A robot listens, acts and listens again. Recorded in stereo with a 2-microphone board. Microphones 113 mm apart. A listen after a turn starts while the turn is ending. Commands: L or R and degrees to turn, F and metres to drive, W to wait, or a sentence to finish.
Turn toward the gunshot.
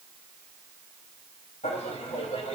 W
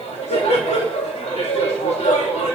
W
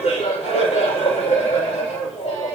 I can't make out a gunshot, only laughter.